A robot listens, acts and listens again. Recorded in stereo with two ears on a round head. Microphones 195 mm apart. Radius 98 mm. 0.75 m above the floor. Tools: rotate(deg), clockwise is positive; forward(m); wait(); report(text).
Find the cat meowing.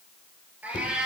rotate(30)
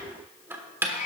rotate(-35)
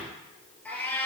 rotate(-10)
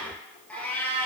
rotate(-10)
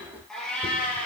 report("Facing the cat meowing, 2 to 4 m away.")